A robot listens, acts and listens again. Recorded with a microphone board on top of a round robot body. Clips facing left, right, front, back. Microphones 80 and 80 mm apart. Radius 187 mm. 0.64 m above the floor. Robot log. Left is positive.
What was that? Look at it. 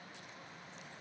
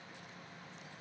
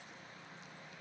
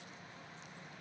cmd idle
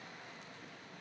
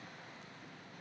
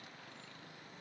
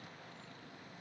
cmd idle
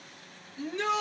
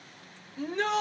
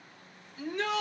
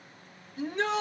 note: The shout: 125° right.
cmd yaw -125
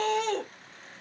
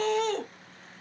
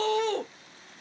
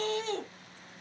end: Found it: a shout, straight ahead, 1 to 2 m away.